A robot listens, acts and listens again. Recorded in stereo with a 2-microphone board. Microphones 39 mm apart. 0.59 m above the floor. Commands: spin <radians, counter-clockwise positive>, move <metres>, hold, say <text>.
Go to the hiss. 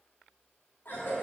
hold
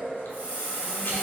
spin -0.61
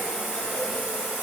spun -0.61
move 1.0
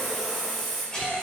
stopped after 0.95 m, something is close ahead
say Arrived at the hiss, straight ahead.